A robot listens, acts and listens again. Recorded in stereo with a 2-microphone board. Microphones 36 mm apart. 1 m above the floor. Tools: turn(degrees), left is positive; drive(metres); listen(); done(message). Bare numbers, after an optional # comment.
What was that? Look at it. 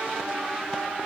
listen()
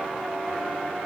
listen()
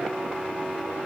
done("I can't make out anything to turn to.")